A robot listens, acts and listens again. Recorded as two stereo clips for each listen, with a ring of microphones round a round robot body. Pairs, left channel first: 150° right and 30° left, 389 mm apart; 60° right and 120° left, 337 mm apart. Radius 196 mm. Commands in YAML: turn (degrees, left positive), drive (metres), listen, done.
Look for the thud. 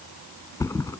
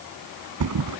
turn: 130
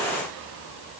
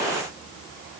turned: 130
done: "I heard a thud from this way, but can't make it out now."